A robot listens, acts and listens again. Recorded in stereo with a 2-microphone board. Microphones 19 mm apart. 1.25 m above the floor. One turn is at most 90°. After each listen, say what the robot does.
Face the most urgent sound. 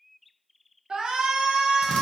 Turn 40° right.
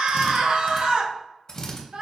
Turn 90° right.
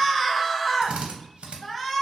Found it: a shout, straight ahead, under 1 m away.